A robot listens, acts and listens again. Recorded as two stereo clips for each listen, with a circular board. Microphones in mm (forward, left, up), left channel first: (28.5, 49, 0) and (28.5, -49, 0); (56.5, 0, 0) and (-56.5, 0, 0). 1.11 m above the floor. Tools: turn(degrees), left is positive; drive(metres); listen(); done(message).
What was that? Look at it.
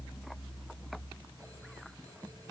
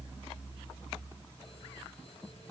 listen()
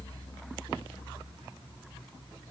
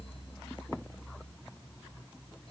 listen()
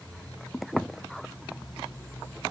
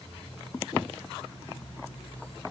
done("I can't make out anything.")